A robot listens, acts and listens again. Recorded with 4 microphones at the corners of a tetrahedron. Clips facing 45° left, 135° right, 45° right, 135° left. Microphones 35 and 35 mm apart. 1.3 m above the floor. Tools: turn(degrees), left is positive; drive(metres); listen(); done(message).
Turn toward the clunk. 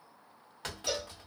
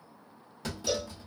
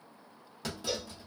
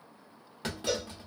turn(degrees=85)
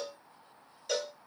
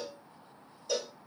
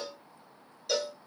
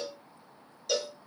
done("Facing where the clunk came from. I can't hear it now.")